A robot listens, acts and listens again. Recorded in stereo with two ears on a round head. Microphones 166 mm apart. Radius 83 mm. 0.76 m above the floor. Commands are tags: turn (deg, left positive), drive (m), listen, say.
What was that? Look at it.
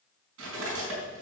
<turn deg="-90"/>
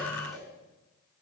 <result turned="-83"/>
<listen/>
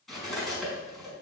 <say>Found it: cutlery clinking, straight ahead.</say>